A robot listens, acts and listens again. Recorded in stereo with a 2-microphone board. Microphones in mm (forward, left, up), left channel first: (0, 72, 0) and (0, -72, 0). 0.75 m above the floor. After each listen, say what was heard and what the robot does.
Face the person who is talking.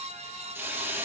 Keep listening.
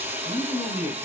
The man speaking: about 70° left or 110° left. Turn 70° left.
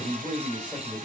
Facing the man speaking.